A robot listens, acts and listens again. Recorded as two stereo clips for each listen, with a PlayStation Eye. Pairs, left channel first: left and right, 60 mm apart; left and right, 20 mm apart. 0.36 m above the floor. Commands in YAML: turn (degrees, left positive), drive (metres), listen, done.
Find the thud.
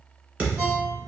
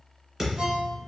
turn: -20
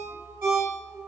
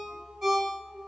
listen: true
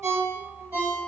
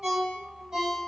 done: "I heard a thud, but can't make it out now. It was about straight ahead or 140° right."